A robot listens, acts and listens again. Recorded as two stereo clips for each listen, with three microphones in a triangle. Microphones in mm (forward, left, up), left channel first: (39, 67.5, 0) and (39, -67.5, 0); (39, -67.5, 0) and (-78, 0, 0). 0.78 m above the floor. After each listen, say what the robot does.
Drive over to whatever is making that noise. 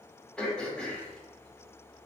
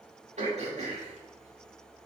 Turn 175° left.
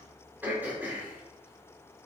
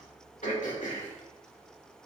Turn 15° right.
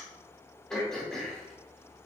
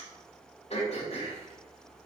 Drive 1.0 m forward.
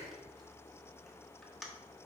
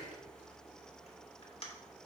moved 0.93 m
Drive 1.0 m forward.
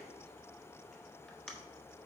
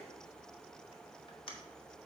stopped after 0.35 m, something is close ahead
Arrived at the throat clearing, straight ahead.